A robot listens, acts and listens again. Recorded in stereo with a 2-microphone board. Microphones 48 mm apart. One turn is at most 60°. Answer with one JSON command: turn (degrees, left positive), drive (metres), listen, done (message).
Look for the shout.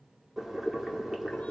{"listen": true}
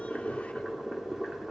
{"listen": true}
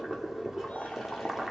{"done": "I can't make out a shout to turn to."}